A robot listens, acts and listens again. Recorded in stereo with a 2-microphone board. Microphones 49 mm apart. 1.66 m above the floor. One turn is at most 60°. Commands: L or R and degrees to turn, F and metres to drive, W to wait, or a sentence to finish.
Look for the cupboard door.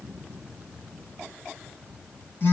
W
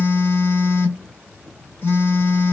W
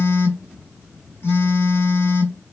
I can't make out a cupboard door, only a phone buzzing.